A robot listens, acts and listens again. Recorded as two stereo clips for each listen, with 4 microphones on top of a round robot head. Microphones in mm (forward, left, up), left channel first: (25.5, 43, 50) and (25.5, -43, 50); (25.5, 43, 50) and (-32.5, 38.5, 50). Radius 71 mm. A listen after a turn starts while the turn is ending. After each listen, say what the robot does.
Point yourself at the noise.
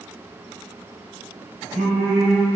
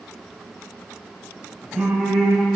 Turn 90° right.
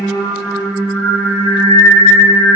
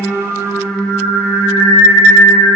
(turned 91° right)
Turn 35° left.
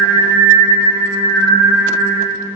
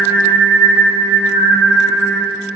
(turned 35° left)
Turn 20° left.
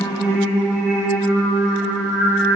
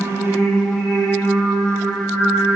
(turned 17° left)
Found it: singing, straight ahead, 2 to 4 m away.